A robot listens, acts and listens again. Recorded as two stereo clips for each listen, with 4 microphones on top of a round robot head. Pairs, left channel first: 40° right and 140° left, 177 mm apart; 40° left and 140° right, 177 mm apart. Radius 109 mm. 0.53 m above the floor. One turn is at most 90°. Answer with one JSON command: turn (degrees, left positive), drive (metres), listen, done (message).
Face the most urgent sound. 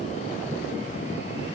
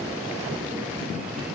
{"listen": true}
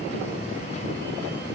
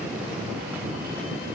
{"listen": true}
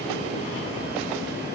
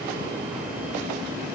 {"done": "I can't make out anything urgent to turn to."}